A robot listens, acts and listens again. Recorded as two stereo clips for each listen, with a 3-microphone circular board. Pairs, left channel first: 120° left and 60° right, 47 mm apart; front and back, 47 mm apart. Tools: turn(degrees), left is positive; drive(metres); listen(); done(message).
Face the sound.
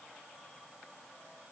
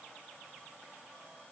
listen()
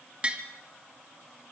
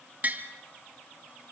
turn(degrees=-125)
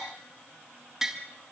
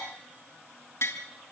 turn(degrees=20)
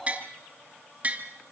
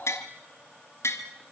done("Facing the tapping.")